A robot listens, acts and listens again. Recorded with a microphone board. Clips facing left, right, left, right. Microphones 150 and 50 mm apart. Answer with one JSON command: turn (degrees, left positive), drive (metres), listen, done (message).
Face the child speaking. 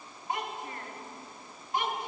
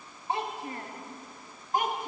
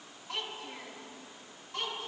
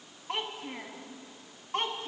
{"turn": -45}
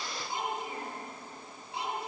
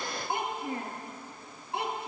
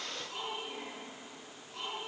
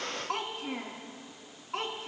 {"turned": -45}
{"turn": -65}
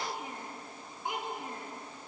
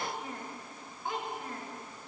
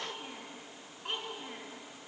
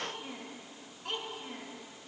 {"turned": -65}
{"turn": 20}
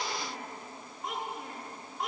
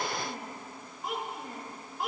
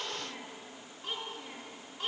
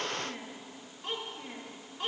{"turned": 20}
{"done": "Facing the child speaking, 2 to 4 m away."}